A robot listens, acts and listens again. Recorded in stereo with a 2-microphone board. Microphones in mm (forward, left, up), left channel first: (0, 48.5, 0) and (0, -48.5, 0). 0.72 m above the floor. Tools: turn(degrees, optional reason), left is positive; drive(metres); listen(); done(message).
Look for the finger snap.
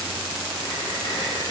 listen()
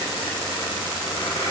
listen()
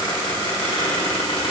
done("I can't make out a finger snap, only a squeak.")